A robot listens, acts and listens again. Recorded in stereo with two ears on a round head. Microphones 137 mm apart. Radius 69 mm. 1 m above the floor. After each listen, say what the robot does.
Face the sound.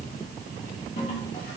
Turn 50° left.
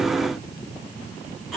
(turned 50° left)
Keep listening.
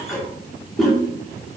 Found it: a toilet flushing, straight ahead.